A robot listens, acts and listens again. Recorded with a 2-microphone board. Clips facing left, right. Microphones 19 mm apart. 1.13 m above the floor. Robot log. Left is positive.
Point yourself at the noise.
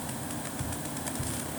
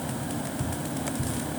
cmd yaw -30
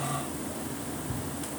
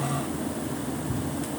note: So it is at 15° left.
cmd yaw +15
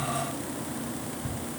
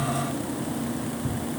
end: Facing the ticking, over 4 m away.